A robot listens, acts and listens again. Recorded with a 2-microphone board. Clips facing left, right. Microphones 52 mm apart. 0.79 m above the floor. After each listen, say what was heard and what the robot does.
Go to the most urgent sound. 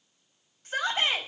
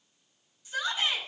The shout: about 50° left or 130° left. Turn 50° left.
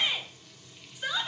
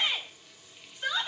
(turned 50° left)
Drive 1.0 m forward.
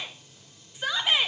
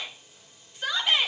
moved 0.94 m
Drive 1.0 m forward.
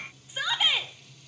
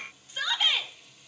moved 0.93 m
The shout is now 10° left. Turn 10° left.
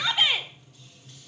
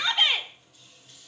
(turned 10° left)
Drive 1.0 m forward.
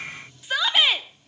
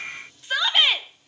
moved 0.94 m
Drive 1.0 m forward.
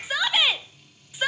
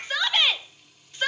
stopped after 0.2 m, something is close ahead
I am next to the shout.